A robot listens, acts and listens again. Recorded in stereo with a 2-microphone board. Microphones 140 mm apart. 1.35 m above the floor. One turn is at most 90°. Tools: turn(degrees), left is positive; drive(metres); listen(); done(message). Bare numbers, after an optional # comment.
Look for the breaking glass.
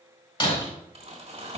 # The breaking glass: about 35° left or 145° left.
turn(35)
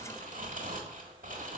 listen()
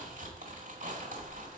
done("I heard breaking glass, but can't make it out now. It was about straight ahead or 110° left.")